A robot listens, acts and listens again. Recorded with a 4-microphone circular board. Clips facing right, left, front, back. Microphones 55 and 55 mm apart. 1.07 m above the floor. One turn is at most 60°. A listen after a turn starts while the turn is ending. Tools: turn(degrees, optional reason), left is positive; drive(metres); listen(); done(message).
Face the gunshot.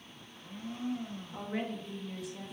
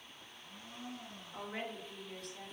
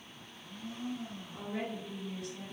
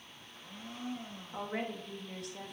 listen()
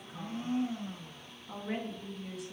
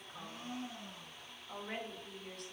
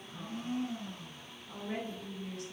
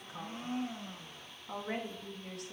listen()
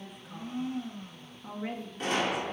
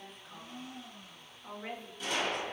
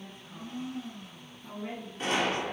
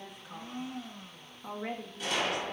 turn(degrees=-50, reason="The gunshot: 50° right.")
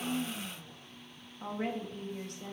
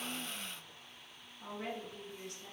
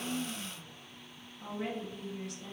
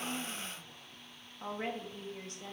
done("I heard a gunshot from this way, but can't make it out now.")